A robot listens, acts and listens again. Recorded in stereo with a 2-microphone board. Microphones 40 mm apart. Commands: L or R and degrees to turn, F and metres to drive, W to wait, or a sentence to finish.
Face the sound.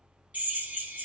R45
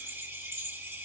R90
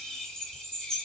L15
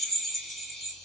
Found it: a drill, straight ahead, 2 to 4 m away.